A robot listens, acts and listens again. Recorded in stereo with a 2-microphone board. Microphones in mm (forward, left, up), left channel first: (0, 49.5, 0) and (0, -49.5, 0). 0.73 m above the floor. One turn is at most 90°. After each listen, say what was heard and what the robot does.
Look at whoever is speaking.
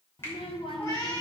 The child speaking: about 70° left or 110° left. Turn 70° left.
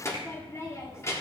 So it is at 30° left. Turn 30° left.
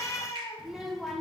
Found it: a child speaking, straight ahead.